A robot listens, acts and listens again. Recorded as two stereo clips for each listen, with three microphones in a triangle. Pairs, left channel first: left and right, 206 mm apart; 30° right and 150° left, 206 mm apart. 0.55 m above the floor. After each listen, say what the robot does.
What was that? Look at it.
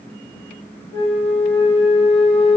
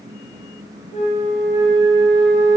Turn 25° left.
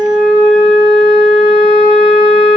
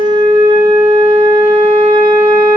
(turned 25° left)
Found it: a flute, straight ahead, 1 to 2 m away.